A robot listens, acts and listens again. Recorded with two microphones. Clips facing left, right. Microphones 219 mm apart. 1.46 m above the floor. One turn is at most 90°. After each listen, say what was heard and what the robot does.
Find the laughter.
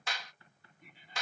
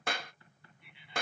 The laughter: about 45° left or 135° left. Turn 45° left.
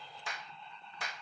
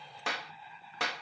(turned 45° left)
Facing the laughter.